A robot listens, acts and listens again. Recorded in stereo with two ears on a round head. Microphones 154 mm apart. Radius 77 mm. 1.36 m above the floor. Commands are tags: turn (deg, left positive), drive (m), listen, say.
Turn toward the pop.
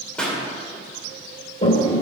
<turn deg="30"/>
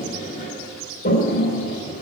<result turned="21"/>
<listen/>
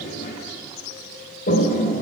<say>I heard a pop, but can't make it out now. It was about 15° right or 155° left.</say>